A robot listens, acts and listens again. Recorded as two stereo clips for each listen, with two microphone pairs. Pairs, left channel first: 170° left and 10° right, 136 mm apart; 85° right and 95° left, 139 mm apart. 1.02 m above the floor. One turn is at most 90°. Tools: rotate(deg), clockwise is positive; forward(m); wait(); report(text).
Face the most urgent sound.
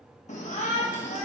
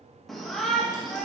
rotate(90)
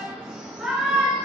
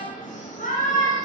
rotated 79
rotate(90)
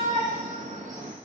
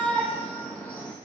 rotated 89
report("Facing the shout, 1 to 2 m away.")